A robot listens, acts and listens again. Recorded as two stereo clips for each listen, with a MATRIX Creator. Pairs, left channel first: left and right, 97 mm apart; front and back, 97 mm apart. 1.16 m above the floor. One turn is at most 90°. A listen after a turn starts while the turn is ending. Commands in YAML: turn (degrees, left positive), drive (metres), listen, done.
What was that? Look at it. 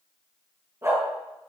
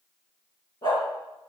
turn: -35
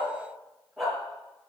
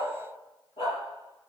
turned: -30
done: "Facing the dog barking."